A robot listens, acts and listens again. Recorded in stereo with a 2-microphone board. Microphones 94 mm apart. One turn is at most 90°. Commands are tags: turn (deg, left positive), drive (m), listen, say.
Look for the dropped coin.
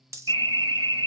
<turn deg="-35"/>
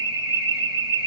<listen/>
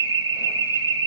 <say>I heard a dropped coin, but can't make it out now. It was about straight ahead or 110° right.</say>